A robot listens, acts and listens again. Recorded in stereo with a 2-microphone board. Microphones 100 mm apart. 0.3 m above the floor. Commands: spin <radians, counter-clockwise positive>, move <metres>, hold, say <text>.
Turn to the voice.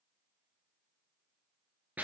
hold
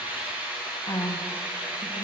spin 0.70
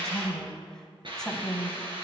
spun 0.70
spin 0.17
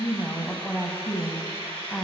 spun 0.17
say Found it: a woman speaking, straight ahead, 1 to 2 m away.